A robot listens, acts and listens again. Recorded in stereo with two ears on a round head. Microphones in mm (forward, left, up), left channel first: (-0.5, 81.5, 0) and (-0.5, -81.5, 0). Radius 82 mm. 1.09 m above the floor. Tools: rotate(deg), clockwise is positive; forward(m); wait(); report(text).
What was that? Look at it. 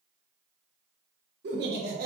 rotate(55)
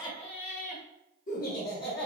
rotate(-60)
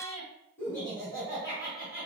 rotate(-15)
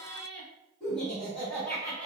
report("Found it: laughter, straight ahead.")